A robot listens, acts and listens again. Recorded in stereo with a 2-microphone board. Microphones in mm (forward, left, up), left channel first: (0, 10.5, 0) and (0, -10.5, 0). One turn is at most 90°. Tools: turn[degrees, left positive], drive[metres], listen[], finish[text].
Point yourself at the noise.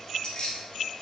Thought: The keys jangling: about 50° left or 130° left.
Action: turn[50]
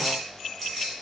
Thought: So it is at 15° left.
Action: turn[15]
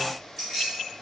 Action: finish[Facing the keys jangling, 2 to 4 m away.]